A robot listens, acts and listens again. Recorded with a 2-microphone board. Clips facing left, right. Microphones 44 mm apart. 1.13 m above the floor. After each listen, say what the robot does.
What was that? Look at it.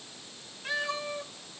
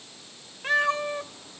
Turn 55° right.
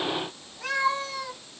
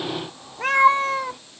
Turn 40° right.
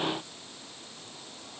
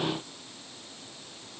Keep listening.
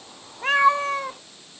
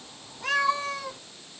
Turn 45° left.
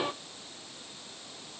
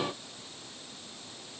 Keep listening.
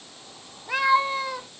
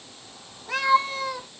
Turn 10° left.
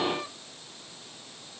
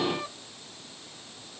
Keep listening.
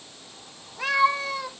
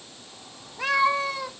Found it: a cat meowing, straight ahead, 1 to 2 m away.